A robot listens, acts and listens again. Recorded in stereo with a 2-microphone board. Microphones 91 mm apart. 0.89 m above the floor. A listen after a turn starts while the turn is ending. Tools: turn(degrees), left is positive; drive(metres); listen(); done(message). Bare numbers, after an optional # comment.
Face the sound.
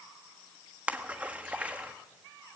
# The splash: about 15° right or 165° right.
turn(-15)
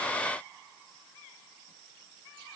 listen()
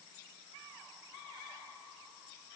done("I heard a splash, but can't make it out now. It was about straight ahead or 150° right.")